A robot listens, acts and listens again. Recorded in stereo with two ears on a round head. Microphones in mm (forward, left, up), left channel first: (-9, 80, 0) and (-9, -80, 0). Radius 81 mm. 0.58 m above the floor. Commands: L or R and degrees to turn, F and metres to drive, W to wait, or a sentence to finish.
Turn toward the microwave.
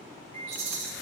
R35
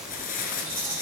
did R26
W
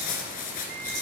W
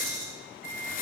R115
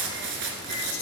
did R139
L20
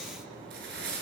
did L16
W
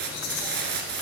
I heard a microwave from this way, but can't make it out now.